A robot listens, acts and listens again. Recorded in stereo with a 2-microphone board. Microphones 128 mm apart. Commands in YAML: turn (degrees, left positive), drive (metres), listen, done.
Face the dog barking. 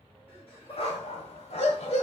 turn: 60
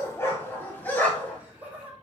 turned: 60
turn: 10
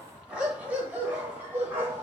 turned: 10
turn: -20
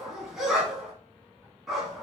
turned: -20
done: "Facing the dog barking."